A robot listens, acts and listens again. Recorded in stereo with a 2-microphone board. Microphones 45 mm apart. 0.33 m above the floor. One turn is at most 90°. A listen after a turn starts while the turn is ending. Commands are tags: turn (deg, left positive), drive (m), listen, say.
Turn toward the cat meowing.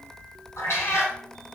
<turn deg="90"/>
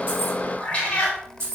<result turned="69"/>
<turn deg="30"/>
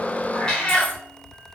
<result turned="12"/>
<turn deg="20"/>
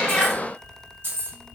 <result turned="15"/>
<listen/>
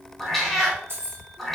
<say>Facing the cat meowing, under 1 m away.</say>